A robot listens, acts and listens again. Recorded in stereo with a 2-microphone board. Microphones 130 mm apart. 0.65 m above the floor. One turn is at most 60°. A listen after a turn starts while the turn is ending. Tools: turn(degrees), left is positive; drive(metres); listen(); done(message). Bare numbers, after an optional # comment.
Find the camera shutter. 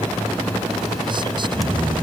listen()
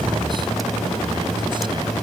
listen()
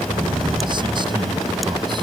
done("I can't make out a camera shutter, only snoring.")